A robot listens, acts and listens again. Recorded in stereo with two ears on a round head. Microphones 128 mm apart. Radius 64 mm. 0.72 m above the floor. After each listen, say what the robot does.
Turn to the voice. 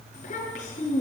Turn 55° left.
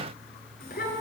Turn 70° left.
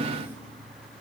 Keep listening.
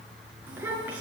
Turn 10° right.
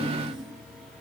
Keep listening.
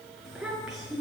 Found it: a child speaking, straight ahead, over 4 m away.